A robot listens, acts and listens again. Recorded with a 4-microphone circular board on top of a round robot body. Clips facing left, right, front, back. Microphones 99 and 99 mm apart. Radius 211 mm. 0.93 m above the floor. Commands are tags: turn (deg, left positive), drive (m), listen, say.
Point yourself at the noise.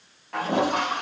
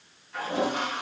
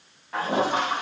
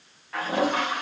<turn deg="65"/>
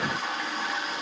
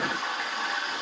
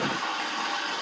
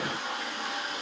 <say>Facing the toilet flushing, over 4 m away.</say>